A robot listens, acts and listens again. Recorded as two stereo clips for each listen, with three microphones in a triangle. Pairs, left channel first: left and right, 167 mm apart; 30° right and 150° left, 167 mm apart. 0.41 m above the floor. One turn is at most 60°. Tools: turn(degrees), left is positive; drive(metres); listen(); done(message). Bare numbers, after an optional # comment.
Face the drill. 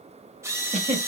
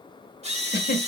# The drill: 160° right.
turn(-60)
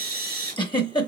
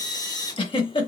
# The drill is now 95° right.
turn(-60)
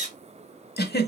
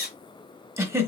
# The drill is now 45° right.
turn(-45)
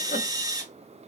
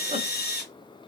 # The drill is now 20° right.
turn(-20)
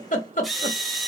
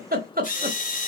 done("Found it: a drill, straight ahead, 1 to 2 m away.")